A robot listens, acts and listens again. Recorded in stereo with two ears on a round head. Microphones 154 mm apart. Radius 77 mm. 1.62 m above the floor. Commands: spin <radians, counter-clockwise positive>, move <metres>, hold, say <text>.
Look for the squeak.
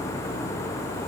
hold
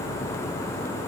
hold
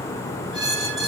spin -0.44
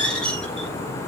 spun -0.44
say Facing the squeak.